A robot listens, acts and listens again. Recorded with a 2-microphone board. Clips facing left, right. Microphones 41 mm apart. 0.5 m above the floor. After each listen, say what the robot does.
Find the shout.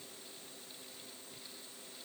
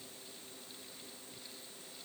Keep listening.
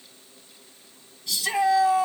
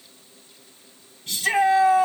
Turn 45° right.
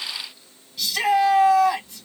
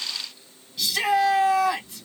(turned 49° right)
Found it: a shout, straight ahead.